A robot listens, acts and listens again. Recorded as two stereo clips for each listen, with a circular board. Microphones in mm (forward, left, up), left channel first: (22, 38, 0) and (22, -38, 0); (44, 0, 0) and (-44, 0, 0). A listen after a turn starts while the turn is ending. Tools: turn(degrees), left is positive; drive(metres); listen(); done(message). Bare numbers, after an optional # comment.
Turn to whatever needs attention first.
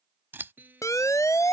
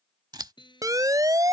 # The siren: 135° left.
turn(135)
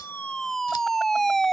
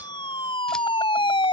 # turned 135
done("Facing the siren.")